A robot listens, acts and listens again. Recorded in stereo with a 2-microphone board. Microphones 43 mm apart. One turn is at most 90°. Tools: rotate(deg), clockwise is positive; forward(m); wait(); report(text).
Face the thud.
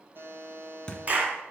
rotate(-25)
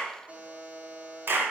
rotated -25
wait()
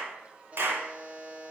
report("I heard a thud, but can't make it out now. It was about straight ahead or 130° left.")